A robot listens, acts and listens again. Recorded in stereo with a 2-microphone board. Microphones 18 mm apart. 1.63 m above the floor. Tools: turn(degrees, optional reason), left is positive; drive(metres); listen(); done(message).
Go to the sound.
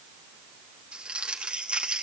turn(degrees=-70, reason="The crumpling: about 70° right or 110° right.")
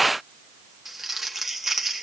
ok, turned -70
turn(degrees=-15, reason="So it is at 15° right.")
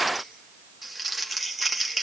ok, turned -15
drive(metres=1.0)
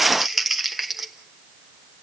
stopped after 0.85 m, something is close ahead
turn(degrees=-10, reason="The crumpling is now 10° right.")
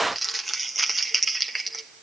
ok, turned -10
done("I am next to the crumpling.")